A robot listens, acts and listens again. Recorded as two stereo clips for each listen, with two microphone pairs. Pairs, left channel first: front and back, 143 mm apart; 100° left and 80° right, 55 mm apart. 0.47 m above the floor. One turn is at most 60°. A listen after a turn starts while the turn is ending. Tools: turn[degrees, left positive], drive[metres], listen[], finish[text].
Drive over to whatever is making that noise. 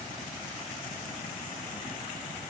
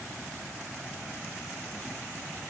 Action: listen[]
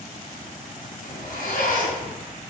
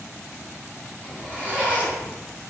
Thought: The zipper: 15° right.
Action: turn[-15]
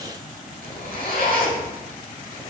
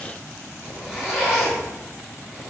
Action: drive[1.0]
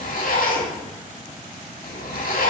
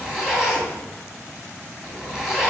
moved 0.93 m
Action: drive[1.0]
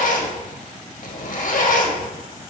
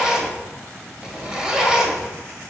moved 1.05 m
Action: drive[1.0]
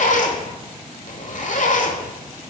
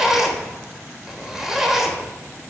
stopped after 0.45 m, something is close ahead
Action: finish[I am next to the zipper.]